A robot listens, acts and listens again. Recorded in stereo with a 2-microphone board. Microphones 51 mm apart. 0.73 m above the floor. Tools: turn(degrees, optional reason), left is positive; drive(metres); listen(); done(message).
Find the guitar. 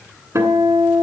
turn(degrees=-60, reason="The guitar: about 60° right or 120° right.")
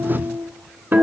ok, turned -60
turn(degrees=-55, reason="So it is at 55° right.")
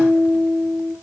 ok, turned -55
done("Found it: a guitar, straight ahead.")